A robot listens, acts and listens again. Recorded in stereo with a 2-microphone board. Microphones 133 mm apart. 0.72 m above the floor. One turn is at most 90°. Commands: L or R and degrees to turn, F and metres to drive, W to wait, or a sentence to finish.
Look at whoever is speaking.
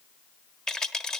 W
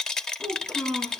L30
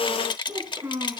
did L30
R25
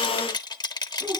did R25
W
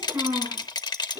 R20
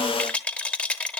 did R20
W
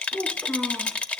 Facing the child speaking, over 4 m away.